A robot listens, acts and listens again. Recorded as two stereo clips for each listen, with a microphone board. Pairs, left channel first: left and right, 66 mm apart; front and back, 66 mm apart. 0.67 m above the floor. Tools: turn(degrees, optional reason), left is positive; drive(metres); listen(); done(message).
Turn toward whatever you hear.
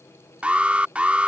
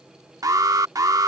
turn(degrees=-160, reason="The alarm: 160° right.")
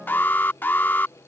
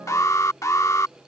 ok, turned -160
turn(degrees=30, reason="The alarm is now 30° left.")
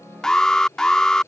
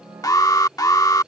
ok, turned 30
turn(degrees=10, reason="The alarm is now 10° left.")
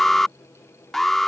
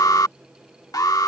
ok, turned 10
done("Found it: an alarm, straight ahead.")